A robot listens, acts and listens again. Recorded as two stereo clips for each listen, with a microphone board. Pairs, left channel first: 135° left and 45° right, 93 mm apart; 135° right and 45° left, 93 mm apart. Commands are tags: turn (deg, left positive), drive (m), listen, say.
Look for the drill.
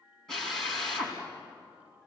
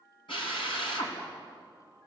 <turn deg="-140"/>
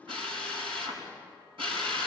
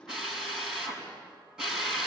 <turn deg="-40"/>
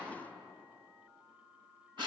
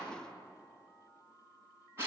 <turn deg="-15"/>
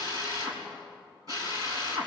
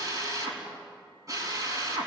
<say>Found it: a drill, straight ahead, over 4 m away.</say>